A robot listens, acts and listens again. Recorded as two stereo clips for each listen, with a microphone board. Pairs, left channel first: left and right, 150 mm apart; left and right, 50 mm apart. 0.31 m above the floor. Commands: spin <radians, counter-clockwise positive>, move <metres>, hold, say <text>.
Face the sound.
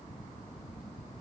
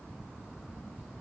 hold
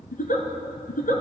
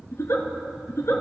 spin 1.57
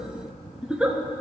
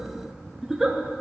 say Facing the giggle, 2 to 4 m away.